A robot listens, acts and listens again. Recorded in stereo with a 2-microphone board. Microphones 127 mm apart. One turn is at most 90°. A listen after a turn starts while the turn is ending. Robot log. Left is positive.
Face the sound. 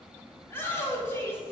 note: The shout: about 15° left or 165° left.
cmd yaw +15
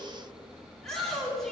end: Facing the shout, 2 to 4 m away.